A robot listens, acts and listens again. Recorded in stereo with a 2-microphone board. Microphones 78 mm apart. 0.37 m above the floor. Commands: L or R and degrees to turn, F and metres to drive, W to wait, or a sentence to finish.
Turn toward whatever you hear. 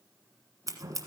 R45
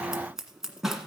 Facing the scissors.